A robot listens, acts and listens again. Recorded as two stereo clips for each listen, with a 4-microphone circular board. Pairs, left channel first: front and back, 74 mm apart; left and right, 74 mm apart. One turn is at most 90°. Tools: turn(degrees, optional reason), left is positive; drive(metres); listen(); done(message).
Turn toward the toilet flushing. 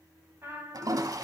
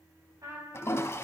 turn(degrees=90, reason="The toilet flushing: 145° left.")
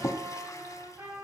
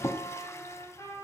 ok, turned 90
turn(degrees=40, reason="The toilet flushing is now 40° left.")
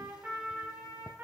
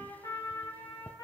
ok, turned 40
listen()
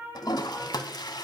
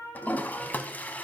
turn(degrees=25, reason="The toilet flushing is now 25° left.")
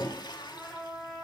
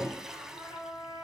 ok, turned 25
done("Found it: a toilet flushing, straight ahead.")